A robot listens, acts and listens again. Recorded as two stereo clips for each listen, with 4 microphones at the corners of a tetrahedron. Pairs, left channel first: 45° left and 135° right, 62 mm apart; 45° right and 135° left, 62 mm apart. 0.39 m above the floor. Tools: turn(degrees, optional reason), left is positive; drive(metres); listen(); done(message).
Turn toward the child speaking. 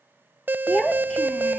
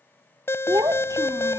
turn(degrees=120, reason="The child speaking: 120° left.")
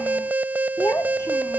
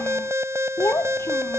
done("Found it: a child speaking, straight ahead.")